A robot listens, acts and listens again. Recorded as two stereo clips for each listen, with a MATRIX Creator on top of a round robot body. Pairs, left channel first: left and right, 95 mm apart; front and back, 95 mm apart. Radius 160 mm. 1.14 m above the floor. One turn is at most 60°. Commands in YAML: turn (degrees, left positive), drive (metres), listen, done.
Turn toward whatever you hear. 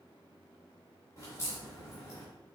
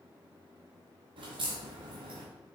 turn: 60
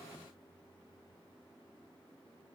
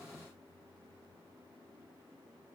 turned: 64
turn: 60
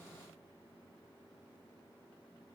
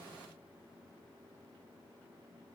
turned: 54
turn: 35
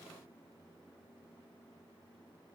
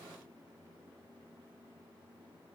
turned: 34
done: "Facing where the crack came from. I can't hear it now."